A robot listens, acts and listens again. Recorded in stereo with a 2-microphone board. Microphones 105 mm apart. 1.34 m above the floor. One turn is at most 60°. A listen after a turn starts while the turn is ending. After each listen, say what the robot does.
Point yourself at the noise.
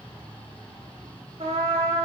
Turn 60° right.
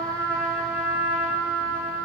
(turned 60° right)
Turn 10° right.
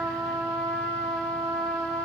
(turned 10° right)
Found it: a trumpet, straight ahead, 1 to 2 m away.